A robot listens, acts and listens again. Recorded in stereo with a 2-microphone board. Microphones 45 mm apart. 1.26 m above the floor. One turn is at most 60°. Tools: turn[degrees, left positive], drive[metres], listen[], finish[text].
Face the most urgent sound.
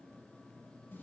Action: listen[]
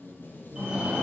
Thought: The fire alarm: about 20° right or 160° right.
Action: turn[-20]
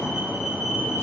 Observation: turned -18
Action: finish[Facing the fire alarm, 2 to 4 m away.]